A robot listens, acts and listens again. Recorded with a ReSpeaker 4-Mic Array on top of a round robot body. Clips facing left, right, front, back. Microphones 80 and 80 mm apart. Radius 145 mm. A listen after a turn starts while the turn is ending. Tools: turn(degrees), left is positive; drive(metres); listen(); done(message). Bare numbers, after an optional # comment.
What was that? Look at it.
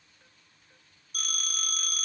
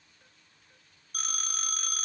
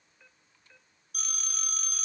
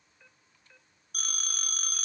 # The phone ringing: 145° right.
turn(-145)
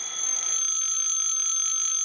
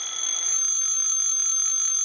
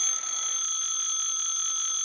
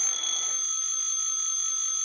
# The phone ringing is now 25° right.
turn(-25)
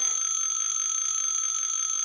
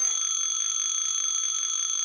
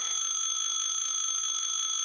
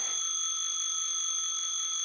done("Found it: a phone ringing, straight ahead.")